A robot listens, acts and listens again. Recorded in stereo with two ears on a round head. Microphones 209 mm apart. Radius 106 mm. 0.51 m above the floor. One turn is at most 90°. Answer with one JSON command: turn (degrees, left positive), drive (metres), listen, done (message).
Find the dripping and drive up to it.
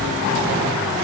{"listen": true}
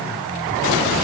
{"listen": true}
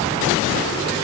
{"done": "I can't make out dripping."}